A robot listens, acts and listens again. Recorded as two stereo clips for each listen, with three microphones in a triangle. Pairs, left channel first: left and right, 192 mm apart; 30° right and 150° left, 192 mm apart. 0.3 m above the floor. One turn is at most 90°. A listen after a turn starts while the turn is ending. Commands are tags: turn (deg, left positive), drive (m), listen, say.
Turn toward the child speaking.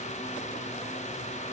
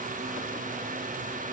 <listen/>
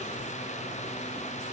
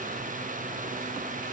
<listen/>
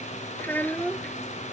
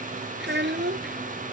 <turn deg="90"/>
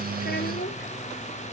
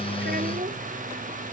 <turn deg="80"/>
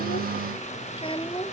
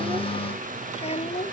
<turn deg="30"/>
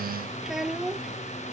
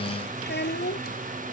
<say>Found it: a child speaking, straight ahead.</say>